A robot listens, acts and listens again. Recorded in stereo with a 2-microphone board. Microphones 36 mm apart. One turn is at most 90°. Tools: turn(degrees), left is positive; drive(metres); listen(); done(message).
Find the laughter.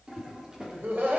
turn(degrees=-70)
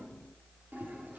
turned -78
listen()
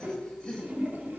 turn(degrees=20)
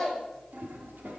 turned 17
done("Found it: laughter, straight ahead, over 4 m away.")